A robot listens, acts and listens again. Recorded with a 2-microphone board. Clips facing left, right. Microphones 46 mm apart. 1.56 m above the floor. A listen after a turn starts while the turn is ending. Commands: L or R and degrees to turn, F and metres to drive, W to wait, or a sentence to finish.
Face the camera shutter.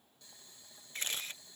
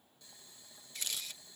L35
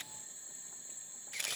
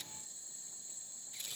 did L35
L110
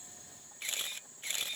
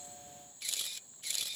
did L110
L35
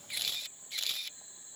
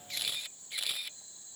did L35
R10
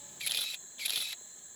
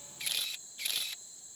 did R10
Facing the camera shutter.